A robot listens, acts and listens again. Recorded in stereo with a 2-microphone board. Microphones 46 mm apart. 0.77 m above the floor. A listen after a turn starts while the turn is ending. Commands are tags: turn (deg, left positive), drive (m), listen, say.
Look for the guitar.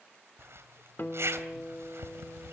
<turn deg="50"/>
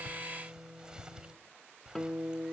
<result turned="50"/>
<say>Found it: a guitar, straight ahead, 2 to 4 m away.</say>